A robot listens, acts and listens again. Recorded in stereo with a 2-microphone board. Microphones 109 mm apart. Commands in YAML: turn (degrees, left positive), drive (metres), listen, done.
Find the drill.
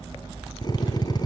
turn: 40
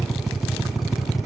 done: "Facing the drill."